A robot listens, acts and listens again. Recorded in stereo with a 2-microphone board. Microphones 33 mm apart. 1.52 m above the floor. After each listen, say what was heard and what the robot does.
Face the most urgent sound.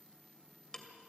Keep listening.
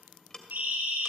Turn 90° right.
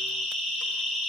Found it: a siren, straight ahead, over 4 m away.